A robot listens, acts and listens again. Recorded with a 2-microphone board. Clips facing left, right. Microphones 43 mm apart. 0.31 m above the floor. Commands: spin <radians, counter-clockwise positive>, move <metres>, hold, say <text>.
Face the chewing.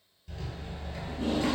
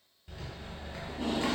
hold
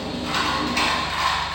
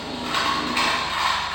hold
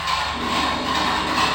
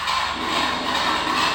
say I can't make out chewing to turn to.